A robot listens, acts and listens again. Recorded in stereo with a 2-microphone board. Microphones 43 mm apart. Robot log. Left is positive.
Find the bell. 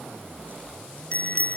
note: The bell: about 35° left or 145° left.
cmd yaw +35
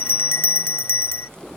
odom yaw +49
note: So it is at 100° left.
cmd yaw +100
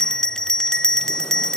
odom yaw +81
note: The bell is now 20° left.
cmd yaw +20
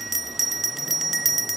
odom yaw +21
end: Facing the bell.